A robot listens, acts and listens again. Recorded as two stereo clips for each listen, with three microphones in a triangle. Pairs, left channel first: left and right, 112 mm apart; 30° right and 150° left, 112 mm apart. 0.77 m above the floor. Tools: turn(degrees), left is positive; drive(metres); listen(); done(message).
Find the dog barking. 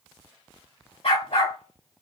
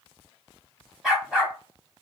turn(degrees=65)
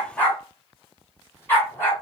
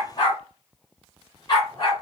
turn(degrees=20)
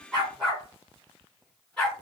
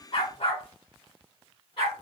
done("Facing the dog barking.")